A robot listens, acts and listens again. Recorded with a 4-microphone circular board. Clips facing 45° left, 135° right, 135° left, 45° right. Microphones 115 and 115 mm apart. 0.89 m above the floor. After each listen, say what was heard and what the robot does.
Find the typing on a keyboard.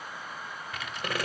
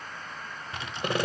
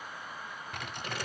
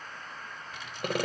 The typing on a keyboard: 165° left. Turn 165° left.
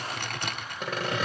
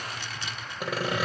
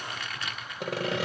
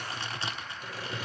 The typing on a keyboard is now 15° left. Turn 15° left.
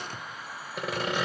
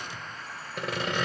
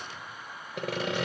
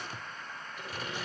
Keep listening.
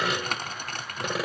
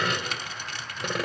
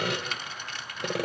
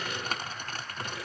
Found it: typing on a keyboard, straight ahead, 1 to 2 m away.